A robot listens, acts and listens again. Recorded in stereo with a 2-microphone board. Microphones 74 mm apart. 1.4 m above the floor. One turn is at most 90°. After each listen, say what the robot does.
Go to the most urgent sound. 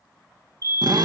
Turn 45° left.
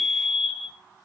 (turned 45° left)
Drive 1.0 m forward.
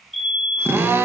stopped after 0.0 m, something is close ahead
Something is in my way. I am facing the fire alarm but have not reached it.